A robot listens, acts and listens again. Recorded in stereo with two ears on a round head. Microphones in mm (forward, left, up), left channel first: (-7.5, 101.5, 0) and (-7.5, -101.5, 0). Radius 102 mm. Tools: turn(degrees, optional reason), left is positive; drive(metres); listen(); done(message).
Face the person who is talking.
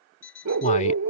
turn(degrees=30, reason="The man speaking: about 30° left or 150° left.")
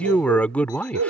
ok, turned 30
done("Facing the man speaking.")